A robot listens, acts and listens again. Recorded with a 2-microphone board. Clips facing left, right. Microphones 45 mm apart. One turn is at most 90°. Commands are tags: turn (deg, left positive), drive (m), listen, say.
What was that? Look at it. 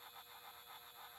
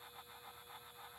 <listen/>
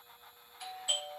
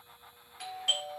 <turn deg="-90"/>
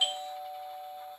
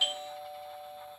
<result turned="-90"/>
<say>Facing the doorbell.</say>